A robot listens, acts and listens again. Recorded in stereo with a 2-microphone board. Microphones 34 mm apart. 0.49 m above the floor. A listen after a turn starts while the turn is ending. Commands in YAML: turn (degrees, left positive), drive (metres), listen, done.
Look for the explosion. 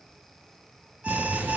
turn: -90
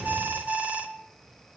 done: "Facing where the explosion came from. I can't hear it now."